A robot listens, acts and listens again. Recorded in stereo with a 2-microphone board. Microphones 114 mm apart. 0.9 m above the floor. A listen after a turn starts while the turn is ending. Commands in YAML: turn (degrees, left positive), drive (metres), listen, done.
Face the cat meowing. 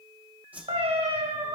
turn: -65
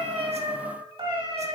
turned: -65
turn: -50
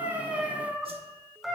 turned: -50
done: "Found it: a cat meowing, straight ahead."